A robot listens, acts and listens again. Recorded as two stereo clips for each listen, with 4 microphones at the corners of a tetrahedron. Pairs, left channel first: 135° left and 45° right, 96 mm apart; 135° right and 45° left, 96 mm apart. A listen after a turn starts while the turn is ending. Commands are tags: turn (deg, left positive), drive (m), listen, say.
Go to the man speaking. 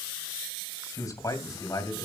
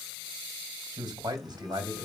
<turn deg="85"/>
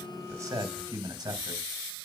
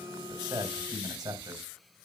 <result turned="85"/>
<drive m="1.0"/>
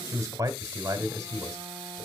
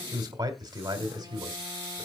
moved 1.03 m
<drive m="1.0"/>
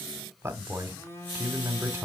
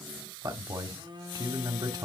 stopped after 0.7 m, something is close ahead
<turn deg="10"/>
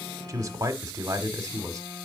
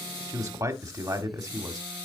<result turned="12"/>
<say>Arrived at the man speaking, straight ahead.</say>